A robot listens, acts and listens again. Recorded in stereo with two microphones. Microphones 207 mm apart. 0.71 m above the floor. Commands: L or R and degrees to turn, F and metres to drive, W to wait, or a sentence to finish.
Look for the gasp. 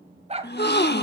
L55
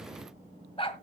W
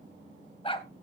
I heard a gasp, but can't make it out now. It was about straight ahead or 70° left.